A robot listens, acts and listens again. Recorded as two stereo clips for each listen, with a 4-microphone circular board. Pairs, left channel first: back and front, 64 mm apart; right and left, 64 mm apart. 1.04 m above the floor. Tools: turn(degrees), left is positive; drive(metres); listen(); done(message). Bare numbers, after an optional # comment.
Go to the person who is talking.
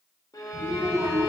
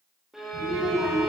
# The child speaking: 10° right.
turn(-10)
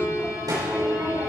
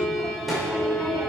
drive(1.0)
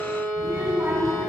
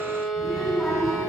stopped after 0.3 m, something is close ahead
done("Something is in my way. I am facing the child speaking but have not reached it.")